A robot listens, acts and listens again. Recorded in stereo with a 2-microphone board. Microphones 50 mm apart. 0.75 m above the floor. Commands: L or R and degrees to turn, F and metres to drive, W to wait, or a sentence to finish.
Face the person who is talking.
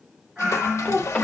L30
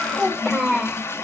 Found it: a child speaking, straight ahead.